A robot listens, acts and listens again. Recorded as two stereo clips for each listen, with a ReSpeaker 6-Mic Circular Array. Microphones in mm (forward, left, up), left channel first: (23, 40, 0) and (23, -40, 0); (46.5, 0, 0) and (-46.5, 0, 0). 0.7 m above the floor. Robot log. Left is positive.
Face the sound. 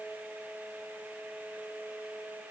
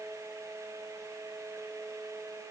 cmd idle
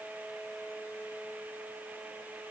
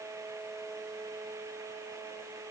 cmd idle
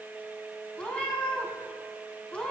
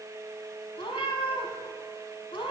note: The cat meowing: 15° left.
cmd yaw +15
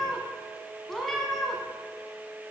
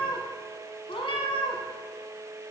end: Found it: a cat meowing, straight ahead.